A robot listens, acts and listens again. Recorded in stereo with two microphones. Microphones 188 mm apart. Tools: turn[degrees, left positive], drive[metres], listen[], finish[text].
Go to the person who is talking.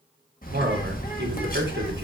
Thought: The man speaking: about 70° right or 110° right.
Action: turn[-70]
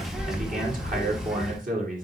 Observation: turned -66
Thought: So it is at 45° right.
Action: turn[-45]
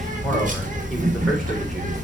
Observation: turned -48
Action: listen[]
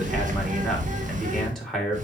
Action: drive[1.0]
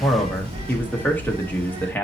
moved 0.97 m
Thought: The man speaking is now 10° left.
Action: turn[10]
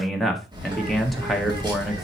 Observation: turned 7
Action: drive[1.0]
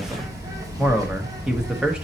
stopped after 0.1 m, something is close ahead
Action: finish[Arrived at the man speaking, straight ahead.]